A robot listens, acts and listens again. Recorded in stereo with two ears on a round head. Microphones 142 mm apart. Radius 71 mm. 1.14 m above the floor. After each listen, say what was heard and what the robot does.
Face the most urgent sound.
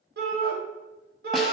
The shout: about 65° right or 115° right. Turn 65° right.
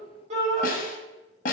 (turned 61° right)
So it is at 45° right. Turn 45° right.
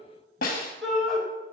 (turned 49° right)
Found it: a shout, straight ahead, 1 to 2 m away.